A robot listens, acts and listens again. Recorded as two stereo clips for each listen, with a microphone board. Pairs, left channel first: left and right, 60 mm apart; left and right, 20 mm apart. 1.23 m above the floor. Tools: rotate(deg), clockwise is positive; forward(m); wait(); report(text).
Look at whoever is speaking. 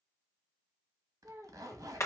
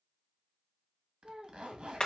rotate(60)
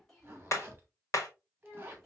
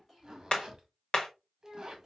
report("Facing the child speaking.")